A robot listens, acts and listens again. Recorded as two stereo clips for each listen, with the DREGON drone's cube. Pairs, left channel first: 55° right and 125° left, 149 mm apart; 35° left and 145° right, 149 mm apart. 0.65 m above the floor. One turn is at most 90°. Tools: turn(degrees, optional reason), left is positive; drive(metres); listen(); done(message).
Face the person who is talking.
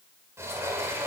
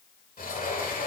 listen()
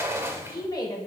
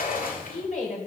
done("Found it: a woman speaking, straight ahead, 2 to 4 m away.")